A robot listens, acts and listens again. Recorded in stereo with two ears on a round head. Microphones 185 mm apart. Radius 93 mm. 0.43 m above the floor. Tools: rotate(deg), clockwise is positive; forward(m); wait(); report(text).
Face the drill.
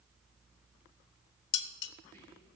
wait()
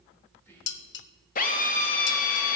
rotate(-40)
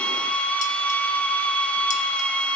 report("Facing the drill, 1 to 2 m away.")